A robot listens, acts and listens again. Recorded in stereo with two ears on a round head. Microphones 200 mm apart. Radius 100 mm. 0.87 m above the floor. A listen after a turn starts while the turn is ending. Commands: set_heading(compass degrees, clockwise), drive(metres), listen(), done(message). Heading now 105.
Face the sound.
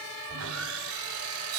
set_heading(170)
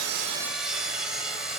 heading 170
done("Facing the sawing, 2 to 4 m away.")